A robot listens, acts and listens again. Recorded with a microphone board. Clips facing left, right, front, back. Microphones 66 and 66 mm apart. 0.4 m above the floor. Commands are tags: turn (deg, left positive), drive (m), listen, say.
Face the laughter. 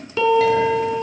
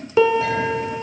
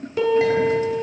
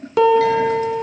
<listen/>
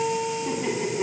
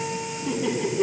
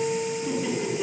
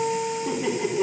<turn deg="150"/>
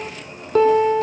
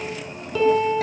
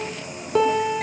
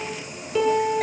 <listen/>
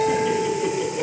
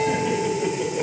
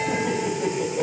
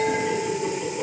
<turn deg="-25"/>
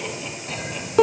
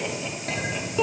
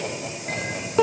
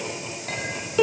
<turn deg="-20"/>
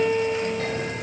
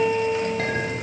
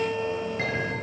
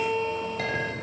<listen/>
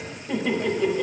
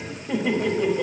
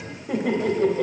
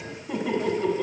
<turn deg="-15"/>
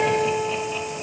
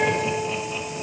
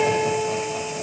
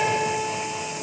<listen/>
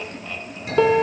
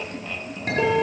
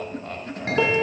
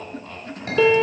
<say>Found it: laughter, straight ahead.</say>